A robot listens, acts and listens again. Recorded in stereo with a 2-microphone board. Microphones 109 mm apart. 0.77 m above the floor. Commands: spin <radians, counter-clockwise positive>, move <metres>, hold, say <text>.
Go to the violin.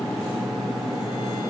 hold
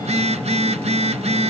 hold
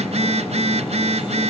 say I can't make out a violin, only a phone buzzing.